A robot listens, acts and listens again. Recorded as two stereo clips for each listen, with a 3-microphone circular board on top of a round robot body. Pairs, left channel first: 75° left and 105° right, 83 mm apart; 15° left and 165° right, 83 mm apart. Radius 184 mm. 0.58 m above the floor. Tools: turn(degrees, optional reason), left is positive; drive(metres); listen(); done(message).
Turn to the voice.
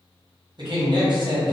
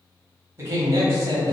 turn(degrees=-110, reason="The man speaking: 110° right.")
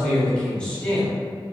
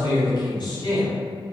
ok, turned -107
done("Found it: a man speaking, straight ahead.")